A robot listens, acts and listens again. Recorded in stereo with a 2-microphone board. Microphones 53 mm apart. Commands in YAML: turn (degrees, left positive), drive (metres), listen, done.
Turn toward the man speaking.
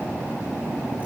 listen: true
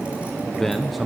turn: -30
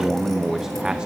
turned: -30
turn: -30
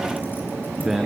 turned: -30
turn: -30
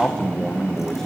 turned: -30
turn: 10
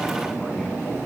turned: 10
listen: true
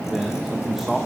done: "Facing the man speaking."